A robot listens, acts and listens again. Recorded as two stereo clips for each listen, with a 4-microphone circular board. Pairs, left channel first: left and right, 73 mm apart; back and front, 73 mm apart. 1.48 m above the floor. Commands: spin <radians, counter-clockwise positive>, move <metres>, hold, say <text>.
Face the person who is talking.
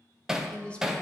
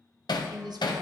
spin 0.26
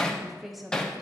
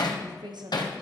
say Facing the woman speaking, under 1 m away.